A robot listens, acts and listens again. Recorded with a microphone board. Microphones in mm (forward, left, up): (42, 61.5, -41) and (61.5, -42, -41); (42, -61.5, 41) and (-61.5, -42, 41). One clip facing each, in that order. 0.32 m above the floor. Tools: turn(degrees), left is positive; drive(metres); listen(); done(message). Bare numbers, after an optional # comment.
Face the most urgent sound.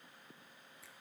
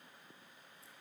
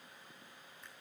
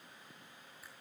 listen()
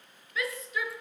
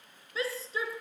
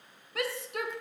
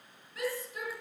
# The shout: 20° right.
turn(-20)
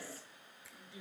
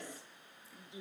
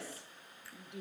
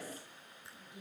# The shout is now 10° right.
turn(-10)
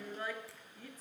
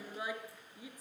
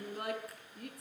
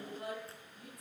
done("Facing the shout.")